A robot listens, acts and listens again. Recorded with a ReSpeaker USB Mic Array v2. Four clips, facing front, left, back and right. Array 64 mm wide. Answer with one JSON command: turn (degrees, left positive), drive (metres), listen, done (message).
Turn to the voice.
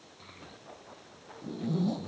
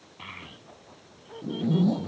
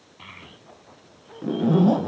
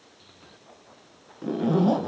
{"turn": 120}
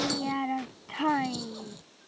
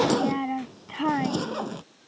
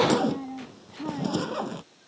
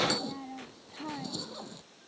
{"turn": 45}
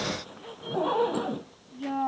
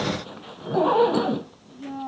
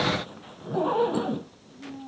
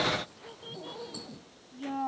{"done": "Facing the child speaking."}